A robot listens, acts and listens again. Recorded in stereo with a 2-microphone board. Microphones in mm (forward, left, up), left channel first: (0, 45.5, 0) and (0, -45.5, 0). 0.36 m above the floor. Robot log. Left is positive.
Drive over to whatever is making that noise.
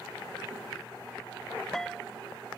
cmd yaw +30
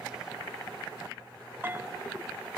note: So it is at 25° right.
cmd yaw -25
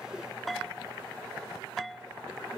cmd fwd 1.0
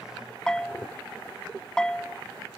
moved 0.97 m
note: The bell is now 10° left.
cmd yaw +10
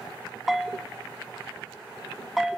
cmd fwd 1.0
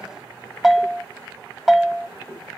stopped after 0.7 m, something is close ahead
end: Arrived at the bell, straight ahead.